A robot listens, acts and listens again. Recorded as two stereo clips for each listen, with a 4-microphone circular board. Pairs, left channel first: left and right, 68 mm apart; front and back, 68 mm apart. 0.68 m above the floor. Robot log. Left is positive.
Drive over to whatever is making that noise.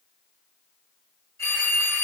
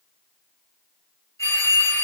note: The phone ringing: 45° left.
cmd yaw +45
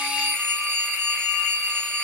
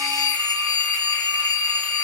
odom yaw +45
note: The phone ringing is now 15° left.
cmd yaw +15
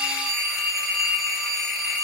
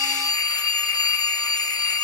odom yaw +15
cmd fwd 1.0
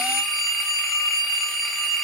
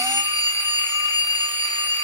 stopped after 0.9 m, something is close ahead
end: Arrived at the phone ringing, straight ahead.